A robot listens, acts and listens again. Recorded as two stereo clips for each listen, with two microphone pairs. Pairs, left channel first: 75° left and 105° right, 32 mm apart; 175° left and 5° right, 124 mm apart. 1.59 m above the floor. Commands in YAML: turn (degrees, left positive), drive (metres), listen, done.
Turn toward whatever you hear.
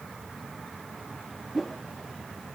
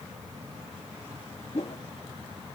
turn: 155
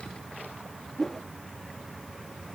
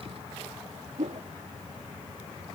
done: "Found it: a whoosh, straight ahead."